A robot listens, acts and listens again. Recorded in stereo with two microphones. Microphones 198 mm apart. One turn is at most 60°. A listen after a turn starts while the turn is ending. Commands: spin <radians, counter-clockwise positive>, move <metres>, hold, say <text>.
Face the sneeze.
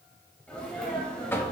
spin 0.52
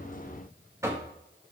hold
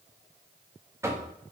say I heard a sneeze, but can't make it out now. It was about 25° right or 145° left.